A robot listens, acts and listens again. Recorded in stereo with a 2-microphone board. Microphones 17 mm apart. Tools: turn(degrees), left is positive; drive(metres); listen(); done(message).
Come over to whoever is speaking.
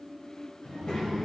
turn(degrees=65)
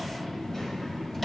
turn(degrees=40)
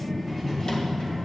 drive(metres=1.0)
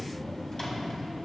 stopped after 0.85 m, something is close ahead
done("I am next to the child speaking.")